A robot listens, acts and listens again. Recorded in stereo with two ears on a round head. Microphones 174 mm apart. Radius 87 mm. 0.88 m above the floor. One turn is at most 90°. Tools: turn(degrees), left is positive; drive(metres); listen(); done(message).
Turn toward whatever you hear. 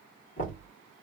turn(degrees=45)
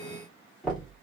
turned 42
done("Found it: knocking, straight ahead.")